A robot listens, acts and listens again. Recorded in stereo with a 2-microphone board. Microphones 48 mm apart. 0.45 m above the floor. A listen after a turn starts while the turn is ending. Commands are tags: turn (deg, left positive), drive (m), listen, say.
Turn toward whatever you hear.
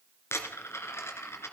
<turn deg="70"/>
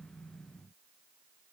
<listen/>
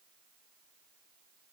<say>I heard a dropped coin, but can't make it out now. It was about straight ahead or 40° left.</say>